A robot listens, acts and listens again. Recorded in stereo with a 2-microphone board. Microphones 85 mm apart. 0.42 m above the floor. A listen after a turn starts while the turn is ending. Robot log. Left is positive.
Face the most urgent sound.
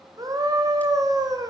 note: The scream: about 45° right or 135° right.
cmd yaw -45
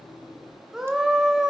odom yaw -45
end: Found it: a scream, straight ahead.